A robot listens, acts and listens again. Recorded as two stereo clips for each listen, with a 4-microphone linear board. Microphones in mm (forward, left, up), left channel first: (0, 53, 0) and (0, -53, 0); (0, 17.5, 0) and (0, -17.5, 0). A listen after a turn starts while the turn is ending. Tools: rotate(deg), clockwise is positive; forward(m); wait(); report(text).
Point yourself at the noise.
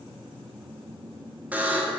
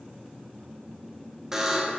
rotate(15)
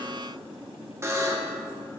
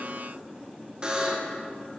rotate(155)
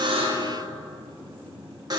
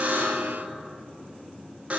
rotate(45)
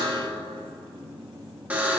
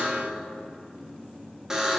rotate(15)
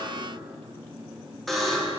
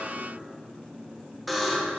report("Facing the buzzer, 1 to 2 m away.")